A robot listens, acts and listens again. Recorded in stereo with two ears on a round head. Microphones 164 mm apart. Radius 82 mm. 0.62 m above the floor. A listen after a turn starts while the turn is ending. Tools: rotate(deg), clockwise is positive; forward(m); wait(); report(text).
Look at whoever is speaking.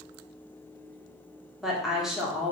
rotate(-30)
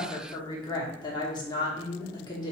rotate(-150)
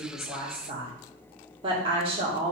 rotate(35)
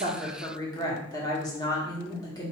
rotate(-25)
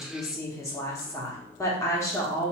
rotate(-20)
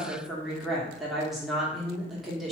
report("Facing the woman speaking.")